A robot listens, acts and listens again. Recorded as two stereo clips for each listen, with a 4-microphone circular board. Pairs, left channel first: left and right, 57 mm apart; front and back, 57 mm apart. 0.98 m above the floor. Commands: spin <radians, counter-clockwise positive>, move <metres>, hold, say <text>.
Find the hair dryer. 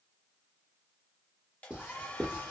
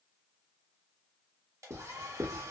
spin 2.71
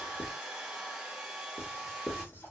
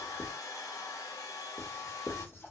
spin -0.17
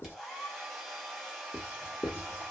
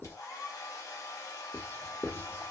say Facing the hair dryer, under 1 m away.